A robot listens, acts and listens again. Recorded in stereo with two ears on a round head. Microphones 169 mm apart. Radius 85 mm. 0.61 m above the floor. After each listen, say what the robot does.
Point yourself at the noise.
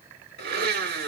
Turn 55° right.
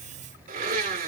Turn 55° right.
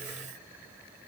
Keep listening.
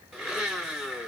Facing the blender, 1 to 2 m away.